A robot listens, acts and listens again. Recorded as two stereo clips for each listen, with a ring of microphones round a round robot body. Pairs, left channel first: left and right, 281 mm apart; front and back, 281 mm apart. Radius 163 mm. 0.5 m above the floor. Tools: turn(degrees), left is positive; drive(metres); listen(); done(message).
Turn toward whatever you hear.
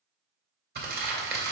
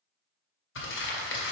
turn(degrees=-40)
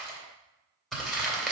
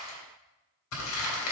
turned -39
done("Found it: crumpling, straight ahead.")